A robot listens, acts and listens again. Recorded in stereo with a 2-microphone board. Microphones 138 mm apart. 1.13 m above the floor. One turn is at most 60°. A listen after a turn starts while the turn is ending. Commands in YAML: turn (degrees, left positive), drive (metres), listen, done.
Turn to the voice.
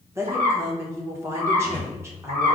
turn: -20
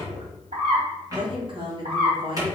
turn: -60
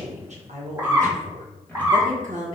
turn: -60
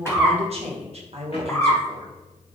turn: -55
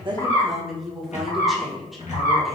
done: "Found it: a woman speaking, straight ahead."